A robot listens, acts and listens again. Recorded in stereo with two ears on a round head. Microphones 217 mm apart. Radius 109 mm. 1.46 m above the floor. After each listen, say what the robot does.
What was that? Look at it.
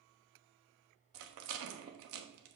Turn 60° right.
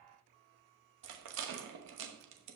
Turn 55° right.
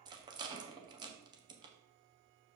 Turn 20° right.
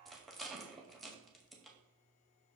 Facing the rattle, 1 to 2 m away.